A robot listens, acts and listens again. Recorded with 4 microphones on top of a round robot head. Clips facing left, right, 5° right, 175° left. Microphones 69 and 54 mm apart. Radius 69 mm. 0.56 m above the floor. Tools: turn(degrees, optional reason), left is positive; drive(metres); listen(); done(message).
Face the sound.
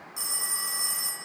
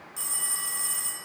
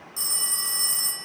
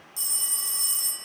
turn(degrees=15, reason="The phone ringing: 15° left.")
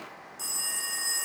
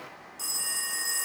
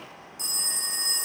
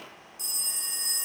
done("Facing the phone ringing.")